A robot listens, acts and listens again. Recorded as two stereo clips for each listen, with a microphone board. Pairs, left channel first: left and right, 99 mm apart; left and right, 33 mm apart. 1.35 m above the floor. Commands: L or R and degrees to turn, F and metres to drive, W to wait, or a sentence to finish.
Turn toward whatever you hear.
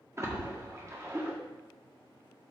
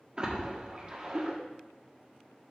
R30
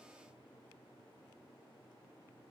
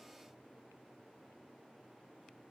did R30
W
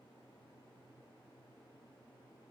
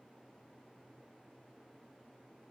I heard a splash, but can't make it out now. It was about straight ahead or 120° right.